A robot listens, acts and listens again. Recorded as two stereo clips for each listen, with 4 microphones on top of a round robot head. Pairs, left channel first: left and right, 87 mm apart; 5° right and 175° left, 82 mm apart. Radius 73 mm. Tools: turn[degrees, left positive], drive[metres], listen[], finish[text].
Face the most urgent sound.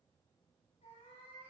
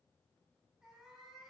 Action: listen[]
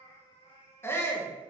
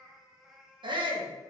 Thought: The shout: 150° left.
Action: turn[150]
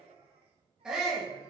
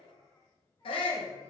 Thought: The shout is now 10° right.
Action: turn[-10]
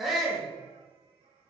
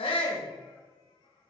Action: finish[Facing the shout.]